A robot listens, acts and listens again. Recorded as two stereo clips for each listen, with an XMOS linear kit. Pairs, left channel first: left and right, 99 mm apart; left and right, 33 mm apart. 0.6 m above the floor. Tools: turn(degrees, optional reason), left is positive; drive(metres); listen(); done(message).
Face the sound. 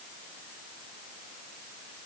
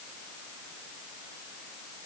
listen()
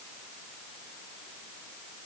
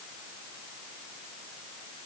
listen()
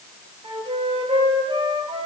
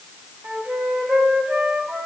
turn(degrees=-70, reason="The flute: about 70° right or 110° right.")
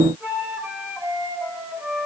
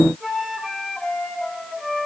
turn(degrees=-15, reason="So it is at 15° right.")
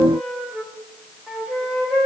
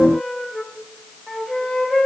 turn(degrees=-10, reason="The flute is now 10° right.")
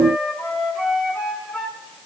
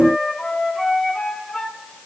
done("Found it: a flute, straight ahead.")